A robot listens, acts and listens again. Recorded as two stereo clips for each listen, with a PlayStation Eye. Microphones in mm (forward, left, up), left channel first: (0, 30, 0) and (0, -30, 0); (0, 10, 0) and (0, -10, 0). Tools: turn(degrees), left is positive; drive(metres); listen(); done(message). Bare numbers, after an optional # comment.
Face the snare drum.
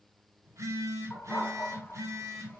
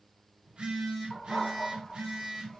listen()
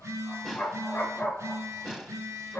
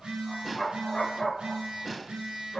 turn(30)
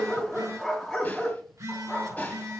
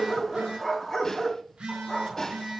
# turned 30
listen()
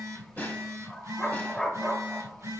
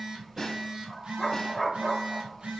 # So it is at 150° left.
turn(150)
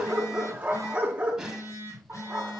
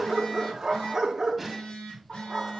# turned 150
# The snare drum is now 10° right.
turn(-10)
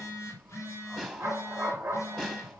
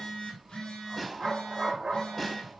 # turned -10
done("Found it: a snare drum, straight ahead, 1 to 2 m away.")